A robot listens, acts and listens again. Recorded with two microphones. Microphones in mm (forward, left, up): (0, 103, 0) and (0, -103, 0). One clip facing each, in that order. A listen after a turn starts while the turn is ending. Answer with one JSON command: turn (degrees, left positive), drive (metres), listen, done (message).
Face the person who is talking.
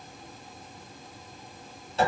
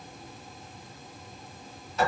{"listen": true}
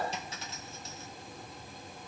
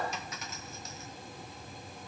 {"listen": true}
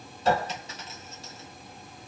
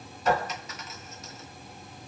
{"done": "I can't make out anyone speaking to turn to."}